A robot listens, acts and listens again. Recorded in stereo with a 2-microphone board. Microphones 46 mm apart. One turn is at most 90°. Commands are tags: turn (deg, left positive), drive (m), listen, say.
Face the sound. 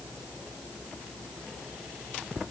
<listen/>
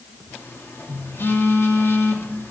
<turn deg="60"/>
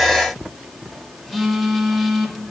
<say>Found it: a phone buzzing, straight ahead, 1 to 2 m away.</say>